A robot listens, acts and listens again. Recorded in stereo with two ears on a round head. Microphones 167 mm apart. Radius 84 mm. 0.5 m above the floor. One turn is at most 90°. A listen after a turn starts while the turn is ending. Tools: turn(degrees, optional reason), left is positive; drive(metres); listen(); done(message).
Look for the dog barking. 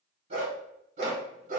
turn(degrees=-45, reason="The dog barking: about 45° right or 135° right.")
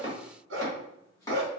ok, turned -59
turn(degrees=-60, reason="So it is at 60° right.")
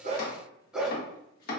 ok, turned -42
done("Found it: a dog barking, straight ahead.")